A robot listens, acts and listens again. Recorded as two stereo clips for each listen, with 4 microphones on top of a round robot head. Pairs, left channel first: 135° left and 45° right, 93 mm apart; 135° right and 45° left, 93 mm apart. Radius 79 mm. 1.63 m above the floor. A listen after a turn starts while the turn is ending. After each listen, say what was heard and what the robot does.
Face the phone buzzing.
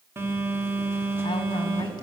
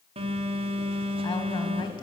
The phone buzzing: 25° left. Turn 25° left.
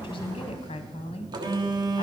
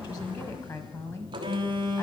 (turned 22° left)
Facing the phone buzzing.